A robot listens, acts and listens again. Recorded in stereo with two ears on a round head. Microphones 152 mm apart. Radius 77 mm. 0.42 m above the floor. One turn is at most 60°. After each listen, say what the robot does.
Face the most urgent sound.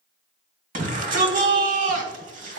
Turn 50° right.
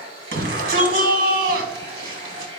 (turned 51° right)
Turn 60° right.
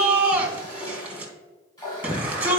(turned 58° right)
Turn 10° right.
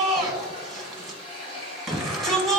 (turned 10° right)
Facing the shout, 1 to 2 m away.